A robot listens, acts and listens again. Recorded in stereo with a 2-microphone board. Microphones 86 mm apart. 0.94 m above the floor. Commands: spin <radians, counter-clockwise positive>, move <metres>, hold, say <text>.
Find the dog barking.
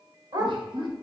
spin -0.96
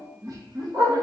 spin -0.96
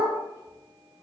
spin -0.79
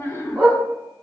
spin -0.44
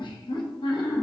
hold
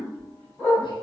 spin 0.17
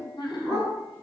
say Found it: a dog barking, straight ahead.